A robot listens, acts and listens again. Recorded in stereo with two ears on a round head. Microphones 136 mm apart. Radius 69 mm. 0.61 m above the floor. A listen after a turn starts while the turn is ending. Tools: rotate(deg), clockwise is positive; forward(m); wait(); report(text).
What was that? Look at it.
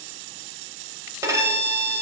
rotate(20)
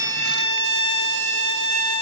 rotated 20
rotate(140)
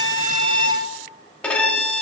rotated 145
report("Found it: a violin, straight ahead.")